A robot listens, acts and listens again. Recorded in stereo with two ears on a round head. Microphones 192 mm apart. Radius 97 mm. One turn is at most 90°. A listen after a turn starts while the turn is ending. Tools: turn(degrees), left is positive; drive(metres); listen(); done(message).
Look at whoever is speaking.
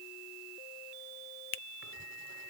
listen()
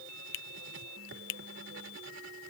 listen()
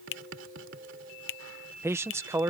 turn(degrees=-30)
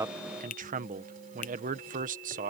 turn(degrees=-90)
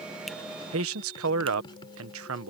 turn(degrees=-75)
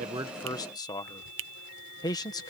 turn(degrees=20)
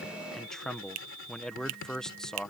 done("Found it: a man speaking, straight ahead.")